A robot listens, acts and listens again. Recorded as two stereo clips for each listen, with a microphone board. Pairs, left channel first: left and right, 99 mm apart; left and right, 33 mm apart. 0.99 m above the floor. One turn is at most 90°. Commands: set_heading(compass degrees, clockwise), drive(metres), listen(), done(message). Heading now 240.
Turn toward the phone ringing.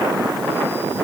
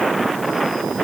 listen()
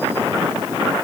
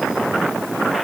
listen()
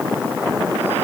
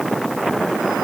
done("I can't make out a phone ringing.")